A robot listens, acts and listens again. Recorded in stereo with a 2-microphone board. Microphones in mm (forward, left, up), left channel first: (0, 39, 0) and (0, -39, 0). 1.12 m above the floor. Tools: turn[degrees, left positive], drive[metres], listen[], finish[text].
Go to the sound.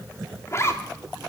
Thought: The zipper: about 35° left or 145° left.
Action: turn[35]
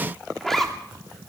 Action: drive[1.0]
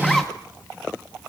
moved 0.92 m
Action: drive[1.0]
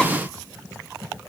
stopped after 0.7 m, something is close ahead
Action: listen[]
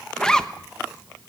Thought: The zipper is now 10° left.
Action: turn[10]
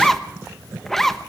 Action: finish[Arrived at the zipper, straight ahead.]